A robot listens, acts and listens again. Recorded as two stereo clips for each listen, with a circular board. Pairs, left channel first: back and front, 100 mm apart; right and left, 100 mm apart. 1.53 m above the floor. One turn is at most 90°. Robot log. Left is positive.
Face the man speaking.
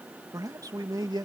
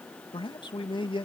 note: The man speaking: 50° right.
cmd yaw -50
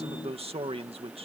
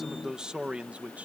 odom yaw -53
note: The man speaking is now 15° left.
cmd yaw +15
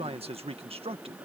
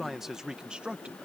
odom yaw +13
note: The man speaking is now 10° left.
cmd yaw +10
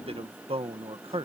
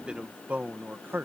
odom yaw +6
note: The man speaking is now 20° left.
cmd yaw +20
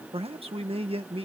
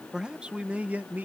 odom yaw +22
note: The man speaking is now 20° left.
cmd yaw +20
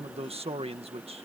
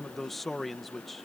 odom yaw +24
end: Found it: a man speaking, straight ahead.